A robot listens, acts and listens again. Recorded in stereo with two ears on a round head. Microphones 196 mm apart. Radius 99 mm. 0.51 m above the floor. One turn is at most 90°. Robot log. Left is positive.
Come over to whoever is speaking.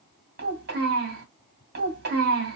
note: The child speaking: about 45° right or 135° right.
cmd yaw -45
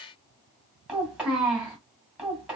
cmd fwd 1.0
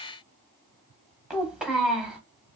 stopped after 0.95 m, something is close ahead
end: I am next to the child speaking.